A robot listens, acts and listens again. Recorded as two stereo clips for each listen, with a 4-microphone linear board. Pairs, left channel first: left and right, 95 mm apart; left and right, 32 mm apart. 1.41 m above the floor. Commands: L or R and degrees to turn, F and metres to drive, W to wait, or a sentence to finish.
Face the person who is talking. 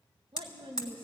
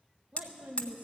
R65
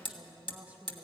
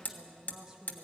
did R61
R20
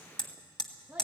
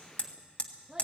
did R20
R15
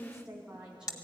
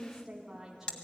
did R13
R10
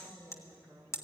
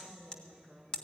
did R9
R10
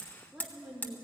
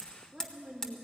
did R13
Facing the woman speaking.